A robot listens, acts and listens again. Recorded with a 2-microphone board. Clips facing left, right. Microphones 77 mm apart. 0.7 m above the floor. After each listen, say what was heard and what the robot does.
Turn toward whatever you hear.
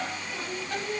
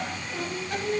The singing: about 70° right or 110° right. Turn 70° right.
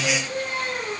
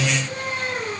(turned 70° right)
So it is at 30° right. Turn 30° right.
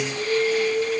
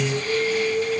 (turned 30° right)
Facing the singing, 2 to 4 m away.